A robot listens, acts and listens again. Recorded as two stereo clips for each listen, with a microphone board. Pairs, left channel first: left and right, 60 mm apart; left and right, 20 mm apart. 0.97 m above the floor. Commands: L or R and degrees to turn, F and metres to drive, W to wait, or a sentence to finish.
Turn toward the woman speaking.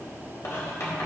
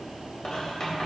W
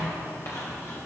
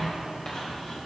W
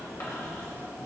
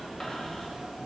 I can't make out a woman speaking to turn to.